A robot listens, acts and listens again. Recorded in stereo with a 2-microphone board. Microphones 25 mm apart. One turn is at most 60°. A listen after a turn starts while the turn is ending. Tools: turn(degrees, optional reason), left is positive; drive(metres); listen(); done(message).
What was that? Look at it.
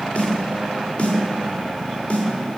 turn(degrees=50, reason="The snare drum: about 50° left or 130° left.")
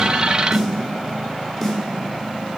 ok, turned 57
done("Found it: a snare drum, straight ahead.")